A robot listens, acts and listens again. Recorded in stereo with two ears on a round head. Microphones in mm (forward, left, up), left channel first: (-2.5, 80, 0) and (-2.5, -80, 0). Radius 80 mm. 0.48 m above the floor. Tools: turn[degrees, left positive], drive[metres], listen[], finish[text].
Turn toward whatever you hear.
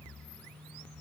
Action: listen[]
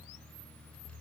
Action: listen[]
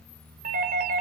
Thought: The doorbell: about 50° right or 130° right.
Action: turn[-50]
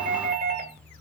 Thought: So it is at 65° right.
Action: turn[-65]
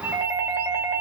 Thought: The doorbell is now 15° right.
Action: turn[-15]
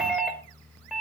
Action: finish[Facing the doorbell.]